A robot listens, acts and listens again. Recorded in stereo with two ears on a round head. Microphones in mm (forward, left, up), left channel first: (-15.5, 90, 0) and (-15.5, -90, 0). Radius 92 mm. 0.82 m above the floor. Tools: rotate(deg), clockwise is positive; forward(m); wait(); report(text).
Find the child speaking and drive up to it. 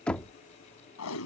wait()
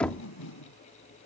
wait()
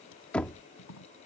report("I can't make out a child speaking to turn to.")